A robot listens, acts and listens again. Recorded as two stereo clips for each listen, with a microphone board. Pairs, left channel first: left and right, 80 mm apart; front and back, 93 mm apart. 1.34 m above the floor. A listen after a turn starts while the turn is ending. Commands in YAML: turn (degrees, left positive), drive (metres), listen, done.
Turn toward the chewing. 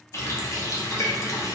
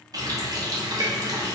listen: true
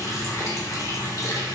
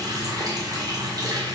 listen: true
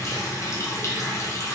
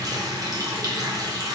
done: "I can't make out chewing to turn to."